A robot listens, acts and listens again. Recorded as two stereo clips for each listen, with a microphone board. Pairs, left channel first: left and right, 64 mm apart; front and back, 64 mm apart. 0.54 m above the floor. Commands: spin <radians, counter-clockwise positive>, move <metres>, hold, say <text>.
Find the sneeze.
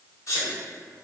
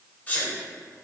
spin 1.13
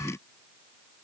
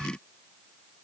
say I heard a sneeze from this way, but can't make it out now.